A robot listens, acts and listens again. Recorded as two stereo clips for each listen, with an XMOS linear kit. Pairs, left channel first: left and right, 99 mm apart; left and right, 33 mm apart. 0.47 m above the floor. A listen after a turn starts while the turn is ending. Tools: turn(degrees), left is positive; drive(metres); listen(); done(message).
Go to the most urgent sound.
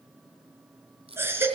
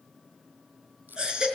turn(degrees=-25)
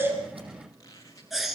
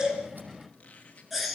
drive(metres=1.0)
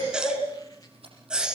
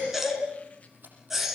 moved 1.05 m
turn(degrees=-10)
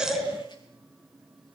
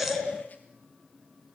drive(metres=1.0)
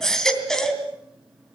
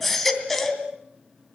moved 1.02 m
drive(metres=1.0)
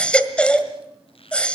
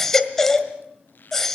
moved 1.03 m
turn(degrees=10)
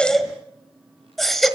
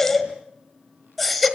drive(metres=1.0)
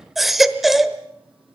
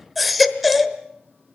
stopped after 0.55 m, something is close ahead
done("Arrived at the baby crying, straight ahead.")